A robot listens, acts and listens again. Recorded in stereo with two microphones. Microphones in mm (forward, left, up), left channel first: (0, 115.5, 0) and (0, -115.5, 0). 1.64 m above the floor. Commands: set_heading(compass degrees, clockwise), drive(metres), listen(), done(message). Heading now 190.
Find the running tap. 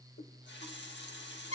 set_heading(140)
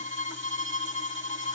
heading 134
listen()
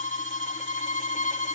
listen()
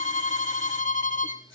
done("I heard a running tap, but can't make it out now. It was about 5° right or 75° left.")